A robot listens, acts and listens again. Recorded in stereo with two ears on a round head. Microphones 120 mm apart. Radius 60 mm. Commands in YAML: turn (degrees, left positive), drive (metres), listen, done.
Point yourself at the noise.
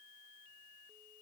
listen: true
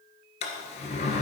turn: 55
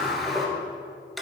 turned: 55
done: "Facing the sliding door, 1 to 2 m away."